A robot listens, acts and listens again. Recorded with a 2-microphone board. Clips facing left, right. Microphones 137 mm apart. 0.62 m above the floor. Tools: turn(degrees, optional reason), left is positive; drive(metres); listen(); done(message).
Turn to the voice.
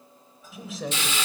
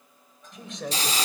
turn(degrees=30)
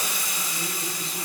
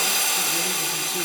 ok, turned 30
listen()
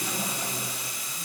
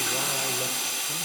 listen()
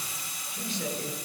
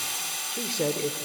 turn(degrees=-65, reason="So it is at 65° right.")
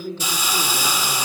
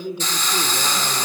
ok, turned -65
turn(degrees=-15, reason="The man speaking is now 15° right.")
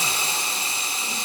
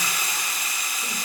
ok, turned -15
listen()
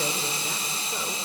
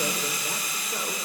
listen()
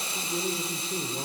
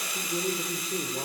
done("Facing the man speaking, 1 to 2 m away.")